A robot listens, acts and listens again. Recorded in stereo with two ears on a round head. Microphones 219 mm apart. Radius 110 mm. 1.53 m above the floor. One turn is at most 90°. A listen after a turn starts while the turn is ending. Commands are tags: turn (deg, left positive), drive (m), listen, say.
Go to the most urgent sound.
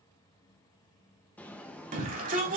<turn deg="-35"/>
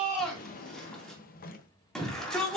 <drive m="1.0"/>
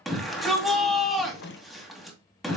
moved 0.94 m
<drive m="1.0"/>
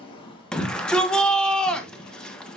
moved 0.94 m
<drive m="1.0"/>
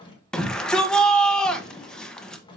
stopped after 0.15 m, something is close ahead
<say>I am next to the shout.</say>